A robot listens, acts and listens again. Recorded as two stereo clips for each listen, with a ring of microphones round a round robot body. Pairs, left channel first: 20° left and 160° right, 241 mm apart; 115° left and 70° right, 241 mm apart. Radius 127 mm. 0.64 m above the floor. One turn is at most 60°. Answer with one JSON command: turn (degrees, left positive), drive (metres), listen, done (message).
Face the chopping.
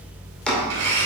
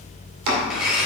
{"turn": -60}
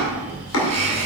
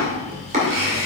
{"done": "Found it: chopping, straight ahead."}